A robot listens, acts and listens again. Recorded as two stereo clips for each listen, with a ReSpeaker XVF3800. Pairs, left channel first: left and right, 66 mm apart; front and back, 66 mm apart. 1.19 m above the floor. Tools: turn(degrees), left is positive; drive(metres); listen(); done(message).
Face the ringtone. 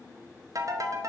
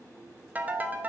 turn(degrees=-115)
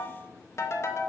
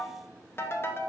turn(degrees=45)
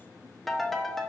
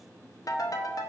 done("Found it: a ringtone, straight ahead.")